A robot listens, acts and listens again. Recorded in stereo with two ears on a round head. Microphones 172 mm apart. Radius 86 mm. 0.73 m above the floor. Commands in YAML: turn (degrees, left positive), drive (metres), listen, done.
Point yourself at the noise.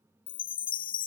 turn: 50
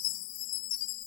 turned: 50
turn: 80
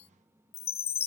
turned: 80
turn: 30
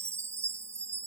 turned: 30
turn: -15
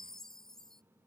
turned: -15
done: "Found it: a chime, straight ahead."